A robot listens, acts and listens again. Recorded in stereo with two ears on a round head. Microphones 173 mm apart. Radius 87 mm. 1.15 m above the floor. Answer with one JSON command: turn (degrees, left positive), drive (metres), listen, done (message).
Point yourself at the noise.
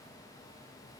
{"listen": true}
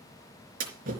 {"turn": -45}
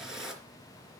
{"done": "Found it: a splash, straight ahead."}